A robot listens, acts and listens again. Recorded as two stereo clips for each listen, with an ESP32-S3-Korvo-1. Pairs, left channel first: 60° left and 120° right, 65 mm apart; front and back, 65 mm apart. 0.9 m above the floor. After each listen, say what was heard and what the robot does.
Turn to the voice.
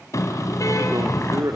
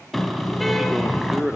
The man speaking: 95° right. Turn 95° right.
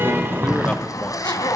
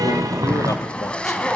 Keep listening.
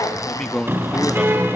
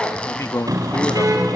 The man speaking is now 25° right. Turn 25° right.
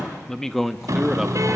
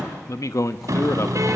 The man speaking is now 35° right. Turn 35° right.
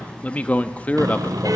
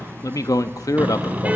Facing the man speaking, 1 to 2 m away.